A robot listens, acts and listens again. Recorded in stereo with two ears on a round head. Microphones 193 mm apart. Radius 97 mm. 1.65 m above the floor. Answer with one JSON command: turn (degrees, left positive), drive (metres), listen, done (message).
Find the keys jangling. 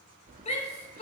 {"turn": -35}
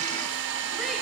{"listen": true}
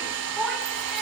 {"listen": true}
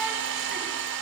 {"done": "I heard keys jangling, but can't make it out now. It was about straight ahead or 110° right."}